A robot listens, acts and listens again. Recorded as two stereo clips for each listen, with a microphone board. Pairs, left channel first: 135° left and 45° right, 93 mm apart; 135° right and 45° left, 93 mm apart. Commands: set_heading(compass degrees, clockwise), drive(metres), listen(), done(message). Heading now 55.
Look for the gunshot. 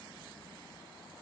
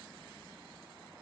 listen()
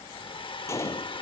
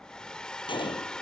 set_heading(220)
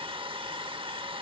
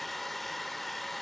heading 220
done("Facing where the gunshot came from. I can't hear it now.")